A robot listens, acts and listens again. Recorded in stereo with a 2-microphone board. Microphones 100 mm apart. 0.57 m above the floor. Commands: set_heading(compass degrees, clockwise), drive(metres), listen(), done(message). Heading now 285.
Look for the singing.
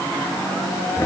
listen()
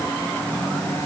listen()
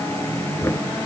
done("I can't make out singing, only knocking.")